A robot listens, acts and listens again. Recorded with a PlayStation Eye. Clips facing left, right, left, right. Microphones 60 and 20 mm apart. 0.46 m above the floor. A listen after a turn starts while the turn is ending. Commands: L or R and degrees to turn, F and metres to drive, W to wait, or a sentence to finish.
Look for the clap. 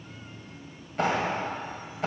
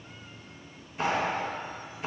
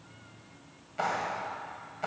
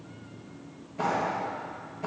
L65
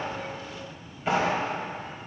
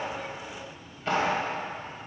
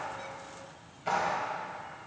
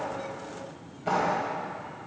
L15
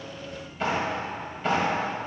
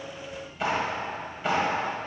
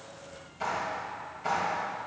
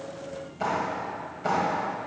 Facing the clap.